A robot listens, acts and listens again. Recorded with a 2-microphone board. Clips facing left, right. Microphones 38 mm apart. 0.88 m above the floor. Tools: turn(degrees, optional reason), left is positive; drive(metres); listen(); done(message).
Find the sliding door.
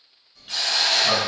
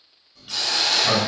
turn(degrees=30)
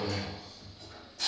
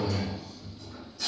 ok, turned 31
turn(degrees=150, reason="So it is at 150° left.")
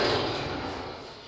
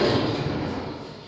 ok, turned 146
done("Found it: a sliding door, straight ahead, 1 to 2 m away.")